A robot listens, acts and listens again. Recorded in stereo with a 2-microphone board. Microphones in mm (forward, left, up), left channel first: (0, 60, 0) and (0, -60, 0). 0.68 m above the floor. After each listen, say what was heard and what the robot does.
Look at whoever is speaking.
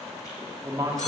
The man speaking: about 30° right or 150° right. Turn 30° right.
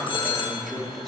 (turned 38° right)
Facing the man speaking, under 1 m away.